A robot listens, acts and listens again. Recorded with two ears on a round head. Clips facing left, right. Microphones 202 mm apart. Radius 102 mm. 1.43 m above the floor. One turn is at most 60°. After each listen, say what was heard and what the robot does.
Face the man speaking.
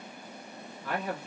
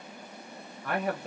The man speaking: about 45° right or 135° right. Turn 45° right.
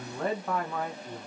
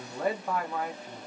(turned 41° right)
Facing the man speaking, under 1 m away.